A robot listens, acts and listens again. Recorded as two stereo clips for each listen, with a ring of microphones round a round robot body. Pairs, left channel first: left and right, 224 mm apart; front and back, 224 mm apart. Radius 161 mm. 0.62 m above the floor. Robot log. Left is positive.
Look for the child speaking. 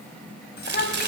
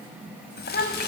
note: The child speaking: 45° left.
cmd yaw +45
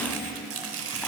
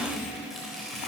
cmd idle
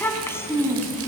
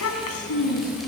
note: The child speaking is now 10° left.
cmd yaw +10
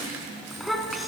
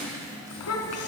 end: Found it: a child speaking, straight ahead, over 4 m away.